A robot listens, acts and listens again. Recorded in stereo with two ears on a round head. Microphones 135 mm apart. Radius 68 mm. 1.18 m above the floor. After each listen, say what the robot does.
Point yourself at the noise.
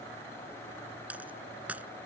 Turn 30° right.
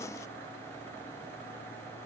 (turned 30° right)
Keep listening.
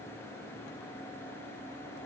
I heard a dropped coin, but can't make it out now. It was about 20° left or 140° right.